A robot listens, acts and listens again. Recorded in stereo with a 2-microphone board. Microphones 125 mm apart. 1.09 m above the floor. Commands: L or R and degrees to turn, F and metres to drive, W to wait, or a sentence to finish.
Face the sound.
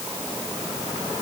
W
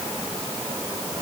W
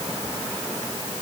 I can't make out anything to turn to.